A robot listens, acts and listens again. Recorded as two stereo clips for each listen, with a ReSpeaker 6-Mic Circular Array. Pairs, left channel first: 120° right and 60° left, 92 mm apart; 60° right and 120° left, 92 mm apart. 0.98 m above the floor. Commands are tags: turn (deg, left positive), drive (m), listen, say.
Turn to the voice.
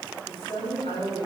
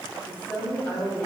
<turn deg="-135"/>
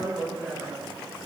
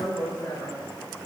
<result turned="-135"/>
<turn deg="-25"/>
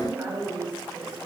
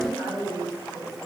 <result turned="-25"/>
<turn deg="-10"/>
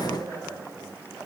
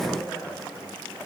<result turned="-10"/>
<say>Facing the woman speaking, over 4 m away.</say>